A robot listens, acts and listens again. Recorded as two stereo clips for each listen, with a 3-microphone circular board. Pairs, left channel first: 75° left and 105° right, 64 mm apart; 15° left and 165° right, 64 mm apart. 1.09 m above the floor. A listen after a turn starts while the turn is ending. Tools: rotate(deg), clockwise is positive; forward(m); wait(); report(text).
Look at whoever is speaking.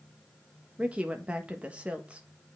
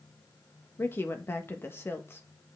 rotate(35)
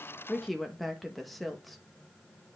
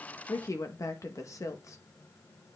rotate(10)
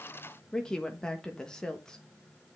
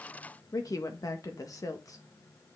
report("Found it: a woman speaking, straight ahead, 1 to 2 m away.")